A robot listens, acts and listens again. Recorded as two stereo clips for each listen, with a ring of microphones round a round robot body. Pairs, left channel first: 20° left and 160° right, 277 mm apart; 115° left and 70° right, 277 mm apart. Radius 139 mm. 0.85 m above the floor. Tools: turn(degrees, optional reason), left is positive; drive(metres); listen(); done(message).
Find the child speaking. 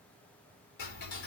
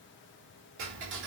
listen()
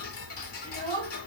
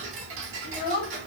turn(degrees=90, reason="The child speaking: 90° left.")
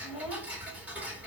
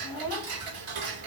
listen()
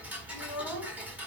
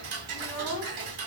turn(degrees=40, reason="The child speaking is now 40° left.")
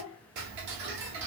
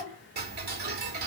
turn(degrees=-15, reason="The child speaking is now 15° right.")
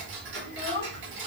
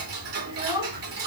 done("Facing the child speaking.")